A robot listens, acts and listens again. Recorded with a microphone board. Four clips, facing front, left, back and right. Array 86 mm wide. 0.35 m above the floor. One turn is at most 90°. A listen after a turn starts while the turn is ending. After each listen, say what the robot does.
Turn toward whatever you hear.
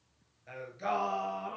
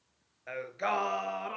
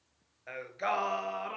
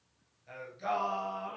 Turn 90° left.
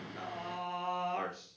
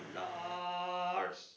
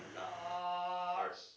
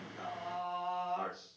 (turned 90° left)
Turn 70° left.
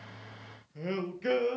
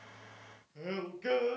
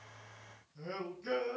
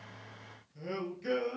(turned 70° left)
Turn 25° left.
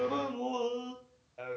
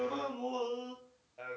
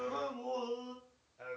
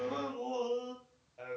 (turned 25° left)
Turn 10° left.
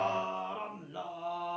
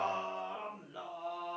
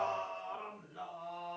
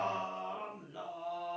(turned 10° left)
Facing the singing, 2 to 4 m away.